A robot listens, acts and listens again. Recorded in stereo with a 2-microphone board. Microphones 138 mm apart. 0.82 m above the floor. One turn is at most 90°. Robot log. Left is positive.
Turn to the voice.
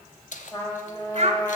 note: The child speaking: about 50° right or 130° right.
cmd yaw -50
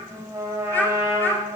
note: So it is at 15° left.
cmd yaw +15
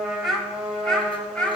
note: The child speaking is now 10° left.
cmd yaw +10
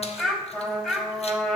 end: Found it: a child speaking, straight ahead, 2 to 4 m away.